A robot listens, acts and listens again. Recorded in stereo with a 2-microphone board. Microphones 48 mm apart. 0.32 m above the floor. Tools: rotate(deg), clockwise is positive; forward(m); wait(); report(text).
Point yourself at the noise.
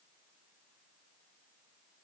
wait()
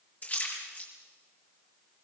rotate(-35)
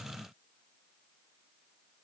wait()
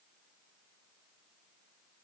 report("I heard a splash, but can't make it out now. It was about straight ahead or 110° left.")